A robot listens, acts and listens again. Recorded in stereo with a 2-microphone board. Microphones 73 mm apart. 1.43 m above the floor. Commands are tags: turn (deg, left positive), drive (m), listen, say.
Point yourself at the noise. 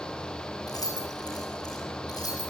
<turn deg="65"/>
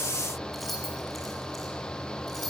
<say>Found it: keys jangling, straight ahead, over 4 m away.</say>